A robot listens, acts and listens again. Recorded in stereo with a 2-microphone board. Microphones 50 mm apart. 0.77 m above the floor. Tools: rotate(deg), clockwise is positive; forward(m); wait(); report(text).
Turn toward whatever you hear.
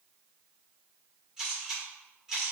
rotate(30)
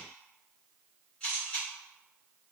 rotate(-20)
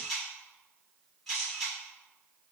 report("Found it: a camera shutter, straight ahead.")